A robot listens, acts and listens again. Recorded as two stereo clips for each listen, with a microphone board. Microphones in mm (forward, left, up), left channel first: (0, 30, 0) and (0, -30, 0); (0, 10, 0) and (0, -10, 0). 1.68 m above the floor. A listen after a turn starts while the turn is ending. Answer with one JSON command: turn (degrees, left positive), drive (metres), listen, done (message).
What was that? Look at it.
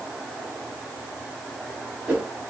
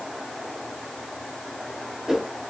{"turn": -35}
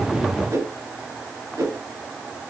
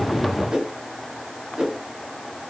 {"turn": -105}
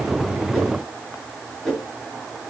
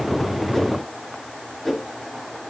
{"turn": 10}
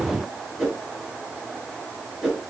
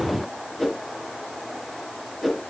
{"done": "Facing the whoosh."}